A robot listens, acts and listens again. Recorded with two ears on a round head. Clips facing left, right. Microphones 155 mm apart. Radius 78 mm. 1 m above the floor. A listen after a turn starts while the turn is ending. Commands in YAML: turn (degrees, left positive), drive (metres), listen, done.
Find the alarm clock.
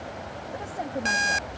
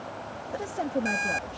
turn: 90
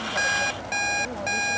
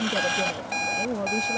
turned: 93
done: "Found it: an alarm clock, straight ahead."